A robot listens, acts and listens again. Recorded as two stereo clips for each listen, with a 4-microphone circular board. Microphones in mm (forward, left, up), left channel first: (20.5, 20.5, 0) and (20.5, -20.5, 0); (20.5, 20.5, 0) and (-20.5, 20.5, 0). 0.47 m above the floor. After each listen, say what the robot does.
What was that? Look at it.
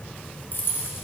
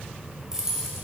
Turn 105° left.
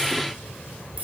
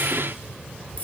Turn 45° right.
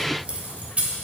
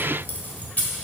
Turn 40° right.
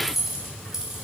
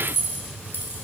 Turn 15° right.
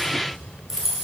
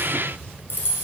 Turn 15° right.
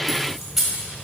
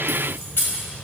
Facing the keys jangling, 1 to 2 m away.